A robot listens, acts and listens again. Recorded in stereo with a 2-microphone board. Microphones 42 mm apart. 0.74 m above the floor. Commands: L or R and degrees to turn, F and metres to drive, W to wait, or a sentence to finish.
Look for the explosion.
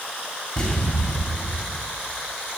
L30
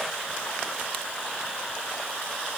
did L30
W
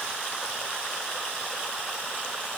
I heard an explosion, but can't make it out now. It was about straight ahead or 120° left.